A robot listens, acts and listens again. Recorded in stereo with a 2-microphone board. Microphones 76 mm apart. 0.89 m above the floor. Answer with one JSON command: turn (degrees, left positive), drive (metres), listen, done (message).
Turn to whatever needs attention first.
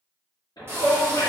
{"turn": 70}
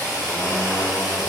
{"listen": true}
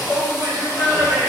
{"turn": 15}
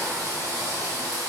{"listen": true}
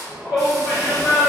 {"done": "Facing the shout."}